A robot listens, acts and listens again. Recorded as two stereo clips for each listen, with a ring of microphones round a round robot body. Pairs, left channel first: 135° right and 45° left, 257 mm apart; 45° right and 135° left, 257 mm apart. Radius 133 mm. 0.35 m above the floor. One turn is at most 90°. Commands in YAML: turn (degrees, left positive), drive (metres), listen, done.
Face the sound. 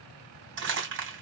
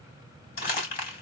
done: "Facing the crumpling."